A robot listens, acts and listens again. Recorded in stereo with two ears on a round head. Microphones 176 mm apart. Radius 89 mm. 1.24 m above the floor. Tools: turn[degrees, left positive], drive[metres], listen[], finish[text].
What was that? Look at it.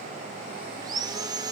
Thought: The sawing: about 20° right or 160° right.
Action: turn[-20]
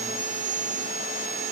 Thought: So it is at 135° right.
Action: turn[-135]
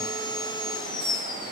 Thought: The sawing is now 25° left.
Action: turn[25]
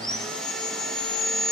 Action: finish[Found it: sawing, straight ahead.]